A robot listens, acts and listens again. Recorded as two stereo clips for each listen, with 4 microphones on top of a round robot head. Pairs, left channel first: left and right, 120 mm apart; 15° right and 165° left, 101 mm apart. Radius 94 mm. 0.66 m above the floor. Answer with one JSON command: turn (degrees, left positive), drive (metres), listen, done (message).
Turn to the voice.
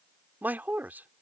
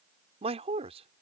{"turn": -165}
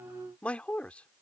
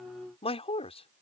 {"turn": 10}
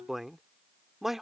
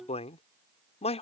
{"done": "Found it: a man speaking, straight ahead."}